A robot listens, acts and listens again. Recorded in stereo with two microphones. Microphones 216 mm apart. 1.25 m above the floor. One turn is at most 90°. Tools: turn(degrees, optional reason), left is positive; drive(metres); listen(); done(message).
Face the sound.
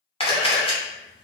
turn(degrees=25, reason="The camera shutter: about 25° left or 155° left.")
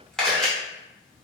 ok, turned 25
done("Found it: a camera shutter, straight ahead.")